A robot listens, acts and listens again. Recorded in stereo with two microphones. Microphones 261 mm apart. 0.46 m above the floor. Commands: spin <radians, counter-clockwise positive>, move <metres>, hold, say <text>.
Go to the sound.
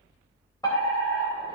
spin 0.26
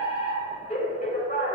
spin 2.62
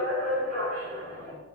spin 0.61
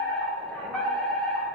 move 1.0
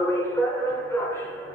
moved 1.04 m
spin 0.26
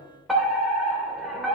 move 1.0
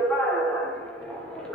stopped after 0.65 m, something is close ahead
say I am next to the fire alarm.